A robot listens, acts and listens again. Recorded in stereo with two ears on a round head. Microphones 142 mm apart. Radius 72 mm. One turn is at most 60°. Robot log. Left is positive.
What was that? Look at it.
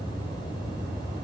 cmd idle
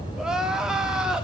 cmd yaw -30
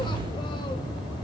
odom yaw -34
cmd idle
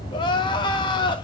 note: So it is at 30° left.
cmd yaw +30
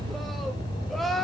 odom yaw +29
end: Facing the crying.